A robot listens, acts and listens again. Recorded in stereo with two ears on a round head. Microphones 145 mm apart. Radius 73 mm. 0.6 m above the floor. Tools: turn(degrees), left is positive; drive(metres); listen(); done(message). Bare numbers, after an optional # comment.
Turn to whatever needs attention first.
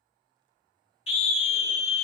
# The scream: about 40° left or 140° left.
turn(40)
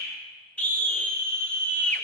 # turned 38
# So it is at 10° left.
turn(10)
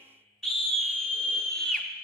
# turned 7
done("Found it: a scream, straight ahead, under 1 m away.")